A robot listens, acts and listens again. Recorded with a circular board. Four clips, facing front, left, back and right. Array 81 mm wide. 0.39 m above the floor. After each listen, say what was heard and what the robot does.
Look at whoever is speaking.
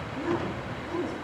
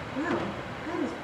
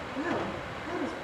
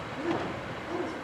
The woman speaking: 105° left. Turn 105° left.
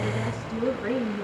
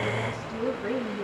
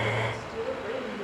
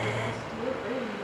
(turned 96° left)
The woman speaking is now 10° left. Turn 10° left.
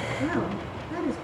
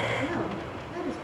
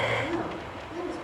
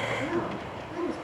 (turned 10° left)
Facing the woman speaking.